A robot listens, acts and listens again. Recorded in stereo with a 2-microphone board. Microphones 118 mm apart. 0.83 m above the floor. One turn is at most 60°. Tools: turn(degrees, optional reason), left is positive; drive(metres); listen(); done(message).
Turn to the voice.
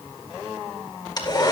listen()
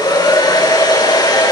listen()
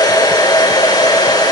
done("I can't make out anyone speaking, only a hair dryer.")